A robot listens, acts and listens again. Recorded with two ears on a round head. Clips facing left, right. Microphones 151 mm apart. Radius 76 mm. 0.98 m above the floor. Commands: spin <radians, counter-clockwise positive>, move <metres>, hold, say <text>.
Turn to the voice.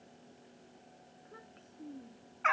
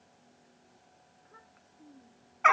spin 0.61
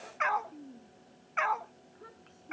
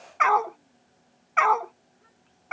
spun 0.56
spin 1.92
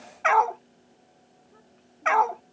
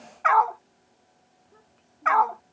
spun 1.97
say Found it: a child speaking, straight ahead.